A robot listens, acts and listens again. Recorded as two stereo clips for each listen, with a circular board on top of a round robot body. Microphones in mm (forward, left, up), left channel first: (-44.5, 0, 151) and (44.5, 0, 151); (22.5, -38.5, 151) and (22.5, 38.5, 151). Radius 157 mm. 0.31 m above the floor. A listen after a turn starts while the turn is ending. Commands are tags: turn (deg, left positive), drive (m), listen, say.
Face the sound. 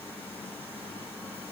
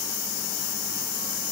<listen/>
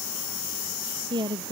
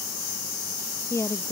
<turn deg="-35"/>
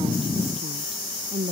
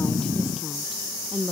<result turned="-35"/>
<say>Facing the woman speaking.</say>